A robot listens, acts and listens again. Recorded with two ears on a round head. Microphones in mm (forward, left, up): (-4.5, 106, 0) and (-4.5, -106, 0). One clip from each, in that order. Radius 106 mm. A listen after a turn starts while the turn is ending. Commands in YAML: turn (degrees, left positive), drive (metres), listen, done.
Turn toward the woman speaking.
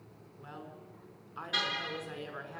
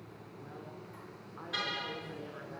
turn: 75
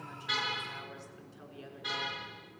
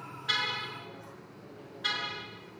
listen: true
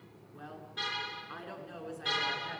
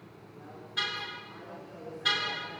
turn: 50
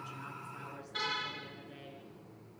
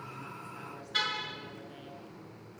listen: true
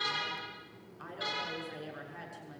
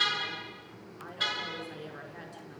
turn: -10
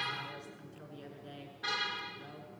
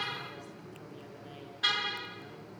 listen: true
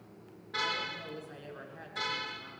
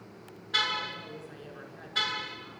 done: "Facing the woman speaking."